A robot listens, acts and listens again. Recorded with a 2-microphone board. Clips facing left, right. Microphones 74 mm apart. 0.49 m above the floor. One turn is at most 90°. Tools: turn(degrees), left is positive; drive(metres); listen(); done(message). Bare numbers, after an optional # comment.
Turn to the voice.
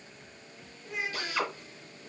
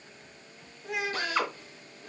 turn(-90)
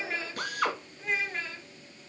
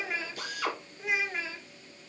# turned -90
done("Found it: a child speaking, straight ahead, 1 to 2 m away.")